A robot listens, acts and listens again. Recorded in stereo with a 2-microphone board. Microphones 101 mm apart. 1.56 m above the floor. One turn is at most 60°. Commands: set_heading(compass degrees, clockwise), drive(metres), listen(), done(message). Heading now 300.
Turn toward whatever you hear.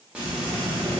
set_heading(330)
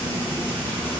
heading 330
set_heading(310)
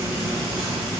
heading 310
done("Facing the frying, under 1 m away.")